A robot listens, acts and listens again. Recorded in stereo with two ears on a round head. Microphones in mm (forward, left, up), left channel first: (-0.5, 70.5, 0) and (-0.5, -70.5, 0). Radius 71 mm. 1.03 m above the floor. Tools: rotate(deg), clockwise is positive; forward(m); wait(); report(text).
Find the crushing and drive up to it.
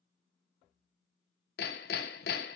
wait()
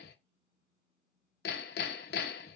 wait()
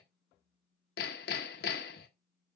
report("I can't make out crushing, only hammering.")